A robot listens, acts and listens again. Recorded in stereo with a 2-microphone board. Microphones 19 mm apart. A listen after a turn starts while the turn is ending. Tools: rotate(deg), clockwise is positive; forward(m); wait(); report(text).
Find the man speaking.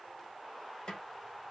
wait()
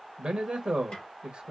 rotate(55)
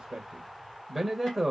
report("Facing the man speaking.")